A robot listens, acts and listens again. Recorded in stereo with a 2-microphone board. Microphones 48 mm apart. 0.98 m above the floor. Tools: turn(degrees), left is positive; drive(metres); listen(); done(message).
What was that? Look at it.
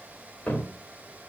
turn(degrees=40)
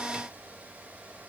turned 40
listen()
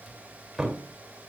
done("Found it: a cupboard door, straight ahead, 2 to 4 m away.")